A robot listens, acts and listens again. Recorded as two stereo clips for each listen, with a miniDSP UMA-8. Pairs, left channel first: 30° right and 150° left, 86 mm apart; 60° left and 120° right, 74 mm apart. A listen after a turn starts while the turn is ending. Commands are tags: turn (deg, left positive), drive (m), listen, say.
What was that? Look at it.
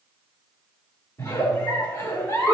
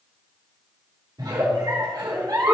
<turn deg="-85"/>
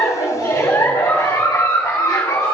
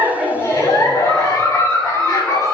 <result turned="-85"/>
<turn deg="20"/>
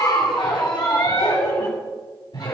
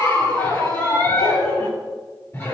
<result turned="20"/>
<say>Facing the giggle, 2 to 4 m away.</say>